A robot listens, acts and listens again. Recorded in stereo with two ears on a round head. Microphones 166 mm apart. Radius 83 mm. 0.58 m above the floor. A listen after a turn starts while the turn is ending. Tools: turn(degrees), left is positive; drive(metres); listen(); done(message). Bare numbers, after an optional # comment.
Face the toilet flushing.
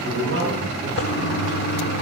# The toilet flushing: about 65° left or 115° left.
turn(65)
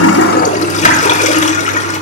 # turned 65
# So it is at 45° left.
turn(45)
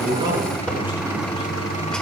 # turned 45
done("Facing the toilet flushing.")